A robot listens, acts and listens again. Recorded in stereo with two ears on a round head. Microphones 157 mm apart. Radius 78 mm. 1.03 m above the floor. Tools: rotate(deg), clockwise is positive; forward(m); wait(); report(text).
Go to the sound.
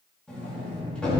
rotate(-30)
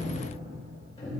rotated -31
rotate(-145)
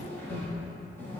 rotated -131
rotate(-10)
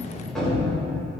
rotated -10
forward(1.0)
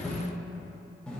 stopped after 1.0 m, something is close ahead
report("I am next to the sliding door.")